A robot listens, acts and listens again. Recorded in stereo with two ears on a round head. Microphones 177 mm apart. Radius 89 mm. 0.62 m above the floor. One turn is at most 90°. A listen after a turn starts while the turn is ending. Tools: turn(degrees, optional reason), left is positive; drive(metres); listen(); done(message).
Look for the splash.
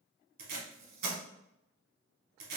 listen()
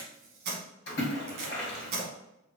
turn(degrees=55, reason="The splash: about 55° left or 125° left.")
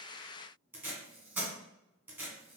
listen()
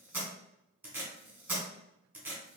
done("I heard a splash, but can't make it out now. It was about straight ahead or 70° left.")